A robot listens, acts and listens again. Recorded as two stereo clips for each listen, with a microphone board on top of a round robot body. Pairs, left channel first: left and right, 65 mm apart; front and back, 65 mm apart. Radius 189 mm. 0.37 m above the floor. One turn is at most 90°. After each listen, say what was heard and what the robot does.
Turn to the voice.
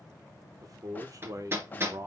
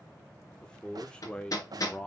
The man speaking: 70° right. Turn 70° right.
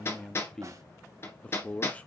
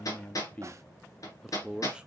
The man speaking is now 115° left. Turn 90° left.
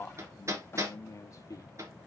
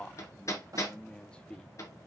The man speaking is now 70° left. Turn 70° left.
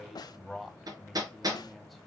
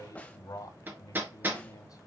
Found it: a man speaking, straight ahead.